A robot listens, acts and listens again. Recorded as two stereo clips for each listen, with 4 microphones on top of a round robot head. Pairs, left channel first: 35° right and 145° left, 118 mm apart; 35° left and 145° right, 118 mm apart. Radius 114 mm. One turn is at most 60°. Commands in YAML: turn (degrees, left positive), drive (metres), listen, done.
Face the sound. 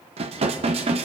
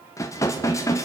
turn: 60
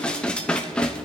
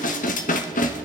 turn: 45
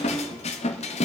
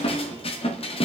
done: "Facing the dishes clattering, under 1 m away."